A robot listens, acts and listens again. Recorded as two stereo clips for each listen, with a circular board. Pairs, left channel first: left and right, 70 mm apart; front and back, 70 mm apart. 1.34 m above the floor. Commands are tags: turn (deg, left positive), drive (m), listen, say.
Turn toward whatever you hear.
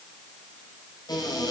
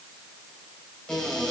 <turn deg="80"/>
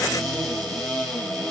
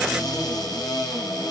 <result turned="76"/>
<say>Found it: a cupboard door, straight ahead.</say>